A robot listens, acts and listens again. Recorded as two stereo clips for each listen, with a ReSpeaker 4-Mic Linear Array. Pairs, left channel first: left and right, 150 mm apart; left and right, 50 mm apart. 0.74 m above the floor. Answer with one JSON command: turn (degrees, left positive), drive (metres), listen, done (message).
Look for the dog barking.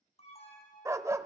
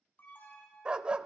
{"turn": -20}
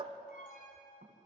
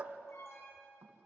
{"turn": -135}
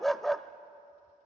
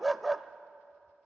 {"done": "Found it: a dog barking, straight ahead, under 1 m away."}